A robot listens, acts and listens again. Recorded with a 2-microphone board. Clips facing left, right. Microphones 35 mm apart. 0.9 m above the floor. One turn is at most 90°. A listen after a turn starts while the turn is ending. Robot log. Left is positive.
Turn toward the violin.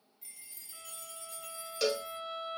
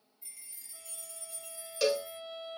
note: The violin: about 50° left or 130° left.
cmd yaw +50
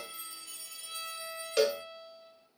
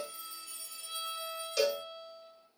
end: Facing the violin.